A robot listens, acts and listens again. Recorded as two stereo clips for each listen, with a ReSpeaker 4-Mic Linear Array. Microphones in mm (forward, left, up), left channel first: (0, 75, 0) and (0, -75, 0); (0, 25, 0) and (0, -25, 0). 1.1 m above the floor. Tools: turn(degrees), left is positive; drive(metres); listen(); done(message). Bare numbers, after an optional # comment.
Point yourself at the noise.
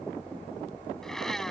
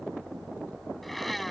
turn(30)
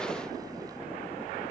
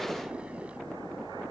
listen()
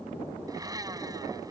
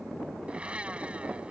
# So it is at 25° right.
turn(-25)
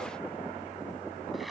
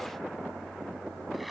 done("Facing the blender.")